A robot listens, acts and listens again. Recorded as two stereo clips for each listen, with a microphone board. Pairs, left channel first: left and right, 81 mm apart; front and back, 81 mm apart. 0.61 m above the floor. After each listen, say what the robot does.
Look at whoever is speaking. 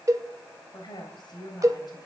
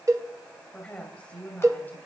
Turn 65° left.
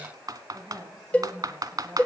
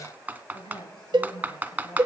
Turn 15° right.
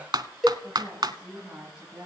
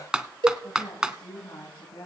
Turn 10° right.
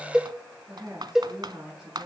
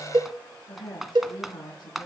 Found it: a woman speaking, straight ahead.